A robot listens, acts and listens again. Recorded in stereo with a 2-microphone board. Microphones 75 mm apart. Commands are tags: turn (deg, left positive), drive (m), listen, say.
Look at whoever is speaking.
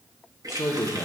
<turn deg="40"/>
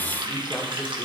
<listen/>
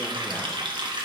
<listen/>
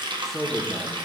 <say>Found it: a man speaking, straight ahead, 1 to 2 m away.</say>